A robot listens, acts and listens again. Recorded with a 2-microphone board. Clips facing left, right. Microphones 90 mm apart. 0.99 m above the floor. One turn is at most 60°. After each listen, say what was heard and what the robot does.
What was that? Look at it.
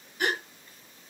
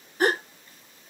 The gasp: about 40° right or 140° right. Turn 40° right.
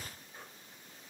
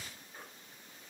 Keep listening.
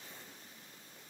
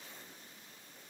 I heard a gasp, but can't make it out now. It was about straight ahead or 100° right.